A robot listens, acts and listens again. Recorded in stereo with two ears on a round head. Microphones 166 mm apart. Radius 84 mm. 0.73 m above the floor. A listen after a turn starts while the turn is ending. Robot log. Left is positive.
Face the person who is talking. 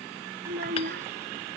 note: The child speaking: about 50° right or 130° right.
cmd yaw -50
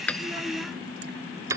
cmd idle
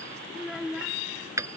end: Facing the child speaking.